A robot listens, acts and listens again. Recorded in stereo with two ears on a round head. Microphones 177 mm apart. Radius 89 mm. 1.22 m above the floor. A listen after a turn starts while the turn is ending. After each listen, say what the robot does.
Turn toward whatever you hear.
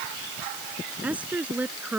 Turn 30° right.
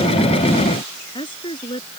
Turn 25° left.
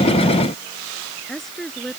Found it: a woman speaking, straight ahead.